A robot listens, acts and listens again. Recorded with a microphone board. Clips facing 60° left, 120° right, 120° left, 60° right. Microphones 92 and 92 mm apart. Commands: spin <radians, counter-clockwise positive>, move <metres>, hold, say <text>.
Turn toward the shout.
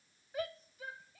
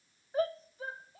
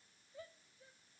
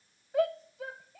spin -1.22
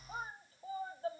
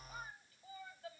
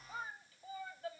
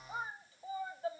say Facing the shout.